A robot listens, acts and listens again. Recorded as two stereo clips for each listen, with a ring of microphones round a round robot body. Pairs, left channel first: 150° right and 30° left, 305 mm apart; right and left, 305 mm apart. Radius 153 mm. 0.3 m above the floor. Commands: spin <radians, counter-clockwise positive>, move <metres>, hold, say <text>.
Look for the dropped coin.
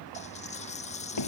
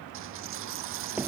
spin 2.44
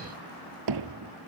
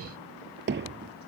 say Facing where the dropped coin came from. I can't hear it now.